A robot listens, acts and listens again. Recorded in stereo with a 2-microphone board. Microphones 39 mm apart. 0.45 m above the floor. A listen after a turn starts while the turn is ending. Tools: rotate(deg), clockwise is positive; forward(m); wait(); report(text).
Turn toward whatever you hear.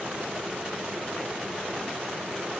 wait()
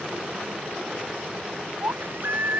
rotate(65)
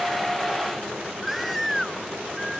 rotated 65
report("Found it: a baby crying, straight ahead.")